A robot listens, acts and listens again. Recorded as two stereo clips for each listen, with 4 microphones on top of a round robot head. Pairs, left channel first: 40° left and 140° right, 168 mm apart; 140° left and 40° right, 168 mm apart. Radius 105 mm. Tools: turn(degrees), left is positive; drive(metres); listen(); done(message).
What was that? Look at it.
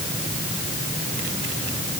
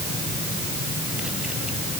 listen()
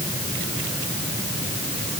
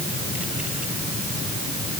listen()
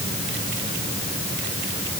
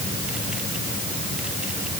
done("I can't make out anything to turn to.")